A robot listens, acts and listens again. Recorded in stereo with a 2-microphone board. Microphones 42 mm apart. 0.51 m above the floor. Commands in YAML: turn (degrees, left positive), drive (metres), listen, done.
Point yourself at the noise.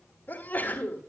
turn: 40
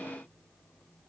listen: true
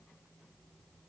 done: "I heard a sneeze, but can't make it out now. It was about straight ahead or 100° left."